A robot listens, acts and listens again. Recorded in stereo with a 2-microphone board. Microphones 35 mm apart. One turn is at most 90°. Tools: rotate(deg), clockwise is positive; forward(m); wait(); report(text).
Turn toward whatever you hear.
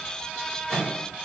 rotate(-20)
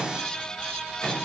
report("Found it: a microwave, straight ahead, 1 to 2 m away.")